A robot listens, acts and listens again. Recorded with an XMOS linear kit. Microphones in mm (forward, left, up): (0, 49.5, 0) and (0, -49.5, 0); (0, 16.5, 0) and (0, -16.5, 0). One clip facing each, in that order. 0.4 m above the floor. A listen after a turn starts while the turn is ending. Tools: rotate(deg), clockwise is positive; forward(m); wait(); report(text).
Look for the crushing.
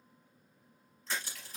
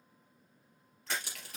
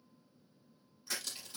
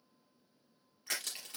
rotate(65)
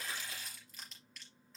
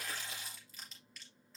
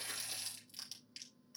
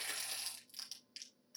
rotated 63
report("Facing the crushing, over 4 m away.")